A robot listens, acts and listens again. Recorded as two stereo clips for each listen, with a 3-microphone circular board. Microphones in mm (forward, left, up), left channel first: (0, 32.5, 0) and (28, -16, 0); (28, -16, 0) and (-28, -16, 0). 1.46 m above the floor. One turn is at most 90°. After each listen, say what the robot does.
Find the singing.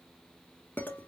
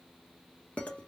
Keep listening.
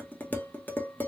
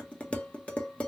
Keep listening.
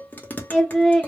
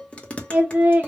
Turn 90° right.
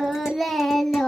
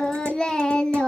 Turn 50° left.
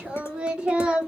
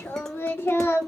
Found it: singing, straight ahead, 1 to 2 m away.